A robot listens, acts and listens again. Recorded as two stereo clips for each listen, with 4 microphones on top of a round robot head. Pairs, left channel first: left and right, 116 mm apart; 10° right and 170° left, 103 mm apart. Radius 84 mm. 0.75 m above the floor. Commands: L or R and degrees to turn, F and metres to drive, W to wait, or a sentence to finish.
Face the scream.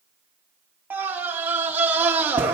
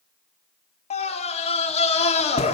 R15
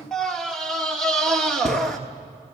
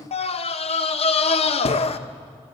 Facing the scream.